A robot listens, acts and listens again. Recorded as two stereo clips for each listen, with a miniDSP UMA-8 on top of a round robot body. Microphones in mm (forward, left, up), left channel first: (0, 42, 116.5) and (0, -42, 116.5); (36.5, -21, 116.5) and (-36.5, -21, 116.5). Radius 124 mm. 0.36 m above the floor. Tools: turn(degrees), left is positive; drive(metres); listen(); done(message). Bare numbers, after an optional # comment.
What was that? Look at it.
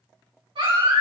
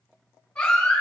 # The baby crying: 75° right.
turn(-75)
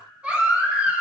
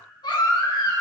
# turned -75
# The baby crying is now 15° right.
turn(-15)
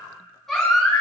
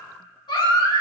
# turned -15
done("Found it: a baby crying, straight ahead, 2 to 4 m away.")